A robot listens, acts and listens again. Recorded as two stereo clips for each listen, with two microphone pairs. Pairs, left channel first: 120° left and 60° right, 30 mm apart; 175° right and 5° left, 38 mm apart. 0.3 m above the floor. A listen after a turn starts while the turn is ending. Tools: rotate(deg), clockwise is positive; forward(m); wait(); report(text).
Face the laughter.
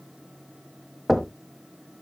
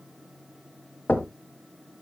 wait()
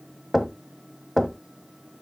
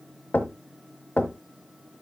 wait()
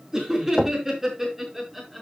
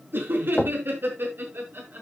rotate(-25)
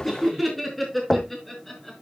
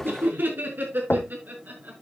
rotate(-40)
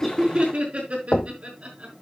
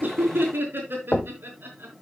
rotate(15)
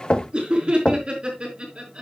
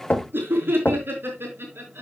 report("Facing the laughter.")